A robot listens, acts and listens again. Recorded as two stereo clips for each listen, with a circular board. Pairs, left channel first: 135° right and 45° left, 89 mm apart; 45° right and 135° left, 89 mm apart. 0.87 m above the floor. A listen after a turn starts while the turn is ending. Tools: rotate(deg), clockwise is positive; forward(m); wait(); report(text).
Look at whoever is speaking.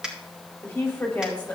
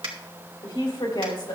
rotate(65)
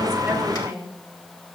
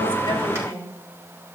report("Facing the woman speaking, 2 to 4 m away.")